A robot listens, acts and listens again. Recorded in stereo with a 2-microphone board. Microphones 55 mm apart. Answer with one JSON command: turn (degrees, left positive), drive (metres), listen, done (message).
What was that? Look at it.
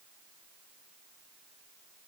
{"listen": true}
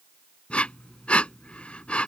{"turn": 20}
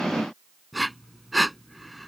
{"done": "Facing the breathing."}